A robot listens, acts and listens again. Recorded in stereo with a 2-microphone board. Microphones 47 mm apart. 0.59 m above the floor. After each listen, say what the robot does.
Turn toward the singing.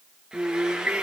Turn 35° right.
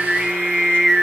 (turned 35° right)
Turn 10° right.
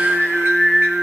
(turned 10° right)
Found it: singing, straight ahead, 2 to 4 m away.